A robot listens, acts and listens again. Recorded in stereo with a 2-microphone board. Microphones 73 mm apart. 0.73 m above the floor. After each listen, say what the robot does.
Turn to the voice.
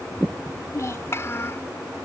Turn 40° left.
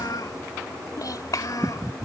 Turn 125° left.
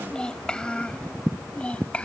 Turn 15° left.
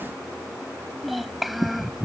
Found it: a child speaking, straight ahead.